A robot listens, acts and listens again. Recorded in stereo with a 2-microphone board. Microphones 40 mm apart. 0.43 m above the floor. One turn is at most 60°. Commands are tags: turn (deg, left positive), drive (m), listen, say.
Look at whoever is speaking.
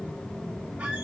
<listen/>
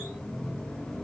<listen/>
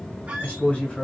<turn deg="35"/>
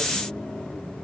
<listen/>
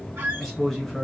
<say>Found it: a man speaking, straight ahead.</say>